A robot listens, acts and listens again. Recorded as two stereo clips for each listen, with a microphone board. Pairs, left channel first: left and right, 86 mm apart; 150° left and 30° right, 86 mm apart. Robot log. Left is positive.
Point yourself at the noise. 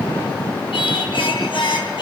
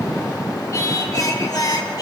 note: The singing: 110° left.
cmd yaw +110
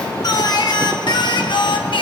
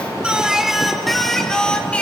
note: The singing is now 75° left.
cmd yaw +75
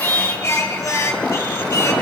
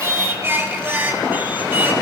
note: The singing is now 35° left.
cmd yaw +35
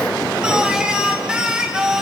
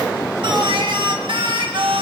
note: The singing is now 10° right.
cmd yaw -10
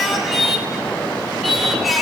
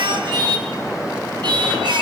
end: Facing the singing, 2 to 4 m away.